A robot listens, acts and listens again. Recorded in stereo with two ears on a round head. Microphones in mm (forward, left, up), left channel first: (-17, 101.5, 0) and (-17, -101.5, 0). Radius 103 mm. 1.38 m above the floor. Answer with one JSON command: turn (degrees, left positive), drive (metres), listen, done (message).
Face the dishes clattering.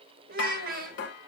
{"turn": 55}
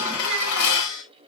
{"turn": 70}
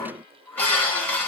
{"turn": 10}
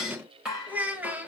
{"done": "Facing the dishes clattering, over 4 m away."}